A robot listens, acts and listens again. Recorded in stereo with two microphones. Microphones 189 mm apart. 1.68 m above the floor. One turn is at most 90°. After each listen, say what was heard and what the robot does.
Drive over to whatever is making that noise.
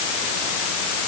Keep listening.
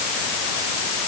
Keep listening.
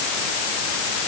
I can't make out anything.